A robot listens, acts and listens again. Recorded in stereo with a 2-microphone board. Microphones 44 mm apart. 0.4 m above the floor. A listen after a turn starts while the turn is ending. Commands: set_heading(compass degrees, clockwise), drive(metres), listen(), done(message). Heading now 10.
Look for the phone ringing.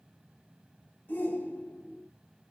listen()
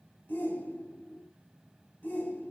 listen()
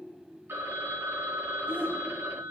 set_heading(85)
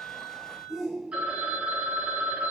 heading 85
set_heading(115)
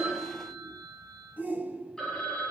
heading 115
set_heading(105)
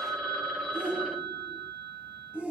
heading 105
done("Facing the phone ringing, 1 to 2 m away.")